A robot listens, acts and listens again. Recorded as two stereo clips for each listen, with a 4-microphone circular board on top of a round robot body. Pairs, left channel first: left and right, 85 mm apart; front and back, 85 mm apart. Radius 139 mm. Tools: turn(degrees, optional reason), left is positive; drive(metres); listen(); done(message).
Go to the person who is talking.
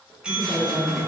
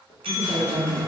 turn(degrees=60, reason="The woman speaking: 60° left.")
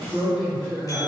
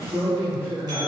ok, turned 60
drive(metres=1.0)
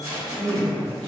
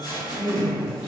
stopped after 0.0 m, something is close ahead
turn(degrees=15, reason="The woman speaking is now 15° left.")
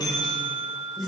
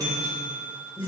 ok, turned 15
done("Blocked. The woman speaking is further on, straight ahead.")